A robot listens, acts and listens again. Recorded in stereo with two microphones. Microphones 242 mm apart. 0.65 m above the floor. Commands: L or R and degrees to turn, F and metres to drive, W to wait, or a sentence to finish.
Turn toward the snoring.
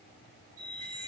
W
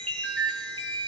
W
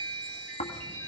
L30
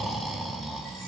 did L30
Found it: snoring, straight ahead.